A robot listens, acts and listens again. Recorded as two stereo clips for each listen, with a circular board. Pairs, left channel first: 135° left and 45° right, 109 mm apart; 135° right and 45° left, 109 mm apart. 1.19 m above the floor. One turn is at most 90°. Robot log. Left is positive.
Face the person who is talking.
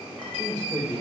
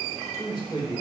note: The man speaking: 90° right.
cmd yaw -90
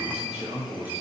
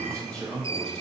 note: The man speaking is now 50° right.
cmd yaw -50
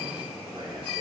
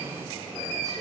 cmd idle
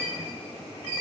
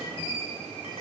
cmd idle
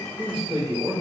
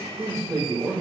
note: The man speaking is now 10° right.
cmd yaw -10
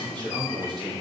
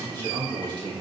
end: Facing the man speaking.